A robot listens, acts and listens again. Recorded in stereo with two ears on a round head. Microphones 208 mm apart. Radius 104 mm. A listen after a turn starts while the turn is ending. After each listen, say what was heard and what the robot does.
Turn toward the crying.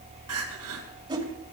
The crying: about 70° right or 110° right. Turn 70° right.
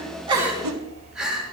Facing the crying.